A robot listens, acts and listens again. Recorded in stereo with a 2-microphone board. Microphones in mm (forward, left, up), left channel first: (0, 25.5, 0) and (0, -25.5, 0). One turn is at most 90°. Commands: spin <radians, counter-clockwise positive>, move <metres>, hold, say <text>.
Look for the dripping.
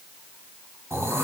hold
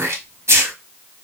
hold
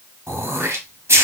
say I can't make out dripping to turn to.